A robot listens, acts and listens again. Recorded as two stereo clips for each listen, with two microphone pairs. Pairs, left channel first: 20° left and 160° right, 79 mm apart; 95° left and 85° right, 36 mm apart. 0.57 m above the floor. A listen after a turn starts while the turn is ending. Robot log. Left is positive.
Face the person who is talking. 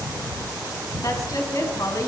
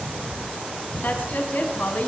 note: The woman speaking: 60° left.
cmd yaw +60
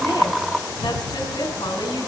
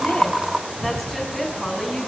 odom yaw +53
end: Facing the woman speaking, over 4 m away.